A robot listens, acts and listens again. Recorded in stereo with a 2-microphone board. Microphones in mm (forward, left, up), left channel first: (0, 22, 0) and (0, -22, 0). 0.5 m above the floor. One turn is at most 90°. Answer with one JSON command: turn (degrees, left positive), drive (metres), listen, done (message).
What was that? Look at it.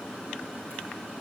{"listen": true}
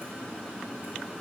{"listen": true}
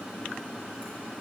{"done": "I can't make out anything."}